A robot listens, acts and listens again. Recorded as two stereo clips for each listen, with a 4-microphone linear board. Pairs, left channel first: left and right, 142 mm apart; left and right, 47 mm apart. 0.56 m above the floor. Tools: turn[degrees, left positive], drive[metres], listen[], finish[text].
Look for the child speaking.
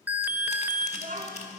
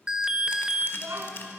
Thought: The child speaking: about 75° right or 105° right.
Action: turn[-75]
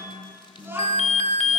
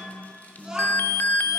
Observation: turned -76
Thought: So it is at 15° right.
Action: turn[-15]
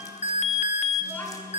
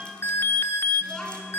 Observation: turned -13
Thought: The child speaking is now 15° left.
Action: turn[15]
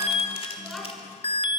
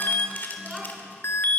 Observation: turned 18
Action: finish[Facing the child speaking, 2 to 4 m away.]